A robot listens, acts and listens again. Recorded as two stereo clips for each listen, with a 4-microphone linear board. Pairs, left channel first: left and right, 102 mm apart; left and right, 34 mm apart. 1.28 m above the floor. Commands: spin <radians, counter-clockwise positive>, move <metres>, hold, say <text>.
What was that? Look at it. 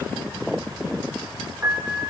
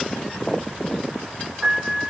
spin -0.35
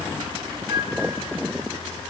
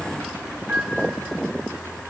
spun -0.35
spin -2.44
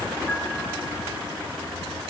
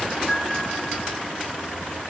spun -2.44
hold
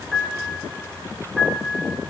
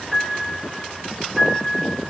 say Found it: a piano, straight ahead.